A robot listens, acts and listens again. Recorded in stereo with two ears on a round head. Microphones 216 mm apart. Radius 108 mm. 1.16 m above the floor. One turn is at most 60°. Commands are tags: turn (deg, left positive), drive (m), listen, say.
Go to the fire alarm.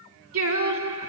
<listen/>
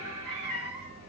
<listen/>
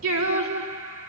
<say>I can't make out a fire alarm, only singing and a cat meowing.</say>